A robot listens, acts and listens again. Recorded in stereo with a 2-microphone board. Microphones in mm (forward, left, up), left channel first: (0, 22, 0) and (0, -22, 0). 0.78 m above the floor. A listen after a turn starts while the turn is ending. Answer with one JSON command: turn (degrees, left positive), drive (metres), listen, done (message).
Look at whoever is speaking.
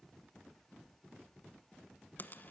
{"listen": true}
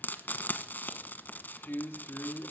{"turn": 55}
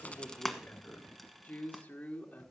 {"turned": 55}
{"turn": 40}
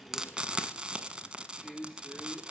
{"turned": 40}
{"turn": 15}
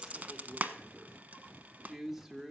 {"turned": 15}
{"done": "Facing the man speaking, 2 to 4 m away."}